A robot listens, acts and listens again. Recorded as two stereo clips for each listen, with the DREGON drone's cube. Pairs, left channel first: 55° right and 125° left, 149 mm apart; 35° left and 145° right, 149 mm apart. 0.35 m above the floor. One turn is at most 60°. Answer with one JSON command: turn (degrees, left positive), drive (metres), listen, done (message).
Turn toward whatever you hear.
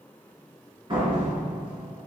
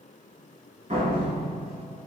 {"turn": 60}
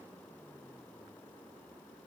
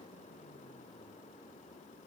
{"turn": 60}
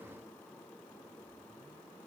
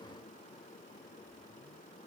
{"turn": 60}
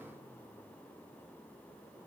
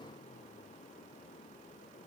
{"done": "Facing where the door slam came from. I can't hear it now."}